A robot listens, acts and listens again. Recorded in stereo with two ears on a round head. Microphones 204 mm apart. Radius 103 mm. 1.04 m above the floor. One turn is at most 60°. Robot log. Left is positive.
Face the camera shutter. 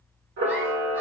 note: The camera shutter: about 55° right or 125° right.
cmd yaw -55
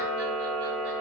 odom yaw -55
note: So it is at 70° right.
cmd yaw -60
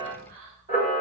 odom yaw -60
note: The camera shutter is now 20° right.
cmd yaw -20
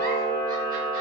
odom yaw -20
end: Found it: a camera shutter, straight ahead.